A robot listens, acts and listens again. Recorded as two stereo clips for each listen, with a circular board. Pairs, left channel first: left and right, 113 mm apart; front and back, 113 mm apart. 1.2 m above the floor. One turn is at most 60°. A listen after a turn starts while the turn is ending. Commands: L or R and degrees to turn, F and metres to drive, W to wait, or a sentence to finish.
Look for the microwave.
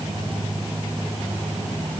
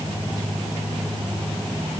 W
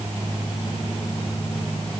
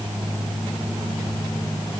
W
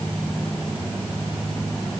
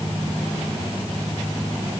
I can't make out a microwave.